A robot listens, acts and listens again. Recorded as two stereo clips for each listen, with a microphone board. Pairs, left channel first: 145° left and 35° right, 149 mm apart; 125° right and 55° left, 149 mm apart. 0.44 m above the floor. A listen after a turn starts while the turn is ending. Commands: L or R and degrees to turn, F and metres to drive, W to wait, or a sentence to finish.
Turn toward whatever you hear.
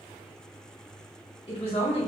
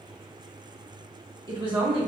L105
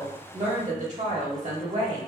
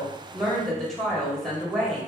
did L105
R40
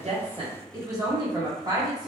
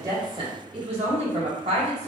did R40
L20
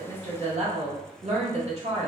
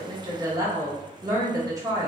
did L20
Found it: a woman speaking, straight ahead, 1 to 2 m away.